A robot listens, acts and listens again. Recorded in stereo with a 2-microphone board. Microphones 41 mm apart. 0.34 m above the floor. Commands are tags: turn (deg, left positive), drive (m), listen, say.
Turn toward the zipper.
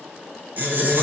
<turn deg="-50"/>
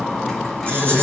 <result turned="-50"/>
<turn deg="-75"/>
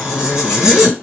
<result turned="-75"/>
<turn deg="-15"/>
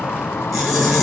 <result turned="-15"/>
<say>Found it: a zipper, straight ahead.</say>